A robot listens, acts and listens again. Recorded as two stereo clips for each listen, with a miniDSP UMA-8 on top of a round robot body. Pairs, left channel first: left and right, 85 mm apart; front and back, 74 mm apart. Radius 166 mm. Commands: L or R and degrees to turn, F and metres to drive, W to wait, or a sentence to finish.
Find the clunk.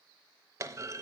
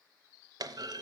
R145
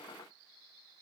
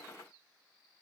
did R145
I heard a clunk from this way, but can't make it out now.